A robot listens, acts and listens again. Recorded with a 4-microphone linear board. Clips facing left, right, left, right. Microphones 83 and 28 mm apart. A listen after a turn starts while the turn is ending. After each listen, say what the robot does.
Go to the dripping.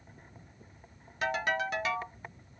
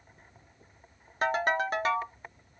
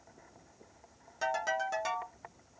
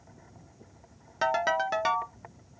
Keep listening.
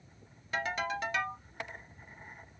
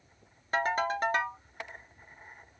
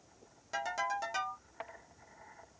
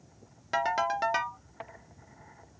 Keep listening.
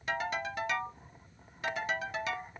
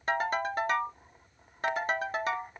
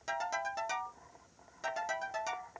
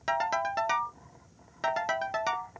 I can't make out dripping, only a ringtone.